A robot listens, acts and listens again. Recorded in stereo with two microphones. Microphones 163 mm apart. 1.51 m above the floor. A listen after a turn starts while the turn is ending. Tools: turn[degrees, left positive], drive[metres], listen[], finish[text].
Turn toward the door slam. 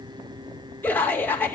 Action: listen[]
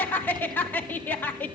Action: listen[]
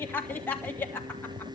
Action: finish[I can't make out a door slam to turn to.]